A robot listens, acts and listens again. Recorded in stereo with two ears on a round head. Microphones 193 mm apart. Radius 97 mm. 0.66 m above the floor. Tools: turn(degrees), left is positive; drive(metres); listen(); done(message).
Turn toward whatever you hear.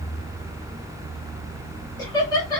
turn(degrees=20)
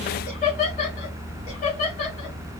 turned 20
turn(degrees=35)
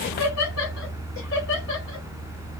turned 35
turn(degrees=115)
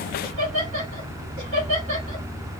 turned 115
turn(degrees=-35)
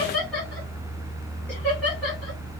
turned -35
done("Found it: laughter, straight ahead.")